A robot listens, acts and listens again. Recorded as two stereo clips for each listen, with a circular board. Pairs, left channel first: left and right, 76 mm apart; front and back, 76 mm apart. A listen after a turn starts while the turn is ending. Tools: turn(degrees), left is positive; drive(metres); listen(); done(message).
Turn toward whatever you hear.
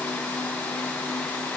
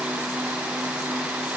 listen()
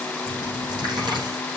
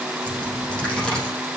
turn(degrees=-80)
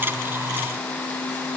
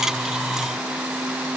done("I heard a dropped coin from this way, but can't make it out now.")